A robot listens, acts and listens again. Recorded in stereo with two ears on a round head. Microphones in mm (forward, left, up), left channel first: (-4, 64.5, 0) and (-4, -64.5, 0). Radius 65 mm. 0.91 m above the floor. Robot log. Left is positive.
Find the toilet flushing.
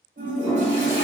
cmd yaw -30
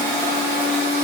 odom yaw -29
note: So it is at 140° right.
cmd yaw -140
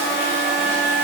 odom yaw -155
note: Nothing new. It was at 15° left.
cmd yaw +15
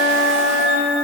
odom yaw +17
cmd idle
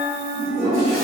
end: Facing the toilet flushing, 1 to 2 m away.